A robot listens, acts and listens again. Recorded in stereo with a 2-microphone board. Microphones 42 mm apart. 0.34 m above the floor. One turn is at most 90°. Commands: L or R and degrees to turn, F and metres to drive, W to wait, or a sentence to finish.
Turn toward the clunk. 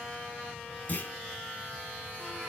L45
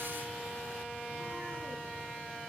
W
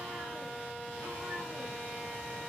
I heard a clunk, but can't make it out now. It was about straight ahead or 90° left.